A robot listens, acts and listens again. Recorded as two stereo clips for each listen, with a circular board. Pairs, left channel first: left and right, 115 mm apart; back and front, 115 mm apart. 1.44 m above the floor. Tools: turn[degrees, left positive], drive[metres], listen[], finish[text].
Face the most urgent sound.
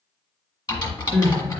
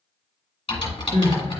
Thought: The crying: 20° left.
Action: turn[20]
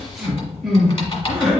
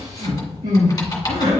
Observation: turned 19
Action: finish[Found it: crying, straight ahead, 1 to 2 m away.]